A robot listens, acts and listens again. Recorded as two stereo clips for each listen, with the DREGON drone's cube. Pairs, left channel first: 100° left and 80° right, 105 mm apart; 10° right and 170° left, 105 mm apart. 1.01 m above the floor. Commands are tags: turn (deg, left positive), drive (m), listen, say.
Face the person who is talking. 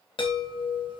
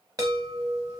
<listen/>
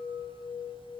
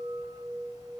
<listen/>
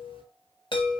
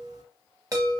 <say>I can't make out anyone speaking, only a chime.</say>